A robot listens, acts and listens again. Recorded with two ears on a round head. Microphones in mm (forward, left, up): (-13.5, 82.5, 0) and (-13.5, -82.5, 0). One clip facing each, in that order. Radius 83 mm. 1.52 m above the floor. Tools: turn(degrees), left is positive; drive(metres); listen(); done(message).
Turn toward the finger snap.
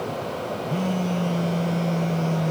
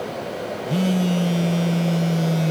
listen()
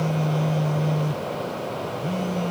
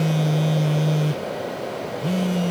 listen()
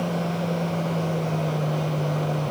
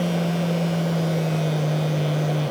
done("I can't make out a finger snap, only a phone buzzing.")